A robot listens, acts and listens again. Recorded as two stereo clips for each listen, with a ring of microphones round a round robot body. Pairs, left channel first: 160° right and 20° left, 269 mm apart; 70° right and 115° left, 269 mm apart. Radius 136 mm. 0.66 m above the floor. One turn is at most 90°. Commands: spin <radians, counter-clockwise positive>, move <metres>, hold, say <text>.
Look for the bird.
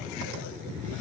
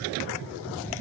hold
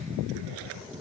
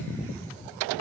hold
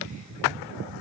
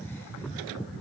say I can't make out a bird to turn to.